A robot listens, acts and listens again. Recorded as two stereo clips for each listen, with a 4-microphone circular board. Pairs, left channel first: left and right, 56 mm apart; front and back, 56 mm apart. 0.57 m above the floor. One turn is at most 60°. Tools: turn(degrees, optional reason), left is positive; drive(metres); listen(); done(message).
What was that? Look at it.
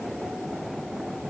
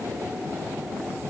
listen()
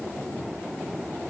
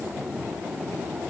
listen()
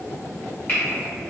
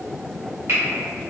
turn(degrees=60, reason="The finger snap: 145° left.")
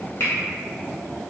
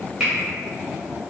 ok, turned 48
turn(degrees=60, reason="The finger snap is now 100° left.")
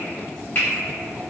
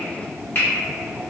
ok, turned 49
turn(degrees=50, reason="The finger snap is now 50° left.")
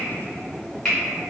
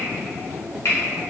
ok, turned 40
turn(degrees=10, reason="The finger snap is now 10° left.")
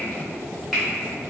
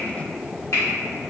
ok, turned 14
done("Found it: a finger snap, straight ahead, 1 to 2 m away.")